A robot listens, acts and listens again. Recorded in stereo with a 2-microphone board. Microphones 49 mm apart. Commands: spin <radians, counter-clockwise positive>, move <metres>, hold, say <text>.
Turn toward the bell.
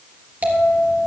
spin -0.61
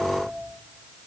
hold
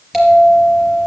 say Found it: a bell, straight ahead, 2 to 4 m away.